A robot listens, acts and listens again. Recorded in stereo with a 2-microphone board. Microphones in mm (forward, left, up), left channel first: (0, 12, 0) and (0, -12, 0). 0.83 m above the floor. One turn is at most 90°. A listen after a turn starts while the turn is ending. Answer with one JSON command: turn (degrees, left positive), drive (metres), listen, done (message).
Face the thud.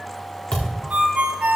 {"turn": 35}
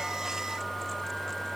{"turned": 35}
{"listen": true}
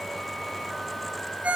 {"done": "I heard a thud, but can't make it out now. It was about straight ahead or 110° left."}